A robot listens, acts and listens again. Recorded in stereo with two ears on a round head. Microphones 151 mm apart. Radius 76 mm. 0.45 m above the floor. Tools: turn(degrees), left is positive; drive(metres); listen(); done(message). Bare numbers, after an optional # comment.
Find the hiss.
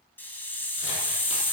turn(30)
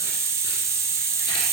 # So it is at 20° right.
turn(-20)
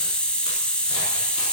done("Found it: a hiss, straight ahead, 1 to 2 m away.")